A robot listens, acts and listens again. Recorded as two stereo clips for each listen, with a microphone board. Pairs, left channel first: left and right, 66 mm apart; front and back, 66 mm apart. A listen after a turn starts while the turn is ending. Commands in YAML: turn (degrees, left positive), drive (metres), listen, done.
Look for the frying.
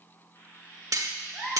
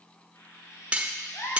turn: 35
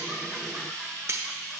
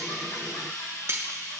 turn: 10
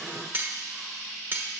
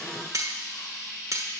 done: "Found it: frying, straight ahead, 2 to 4 m away."